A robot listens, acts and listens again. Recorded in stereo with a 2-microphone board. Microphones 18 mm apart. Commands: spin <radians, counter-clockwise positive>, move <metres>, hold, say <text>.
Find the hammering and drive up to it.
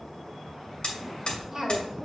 spin 1.13
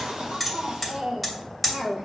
move 1.0
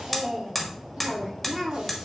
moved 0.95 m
move 1.0
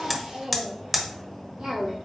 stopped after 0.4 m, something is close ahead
spin -0.17
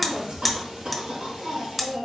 say I am next to the hammering.